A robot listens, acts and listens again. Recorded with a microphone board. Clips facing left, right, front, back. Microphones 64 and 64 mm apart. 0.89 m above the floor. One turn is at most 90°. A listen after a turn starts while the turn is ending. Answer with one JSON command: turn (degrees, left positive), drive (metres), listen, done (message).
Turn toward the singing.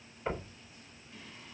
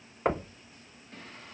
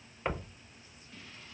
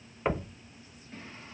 {"turn": -90}
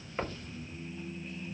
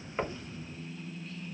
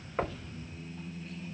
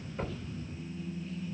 {"turn": 25}
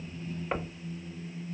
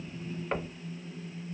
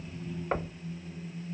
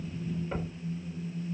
{"turn": 15}
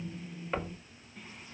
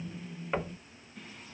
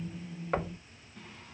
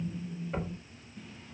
{"turn": 10}
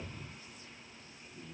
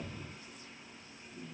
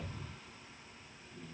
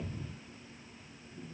{"done": "Facing the singing."}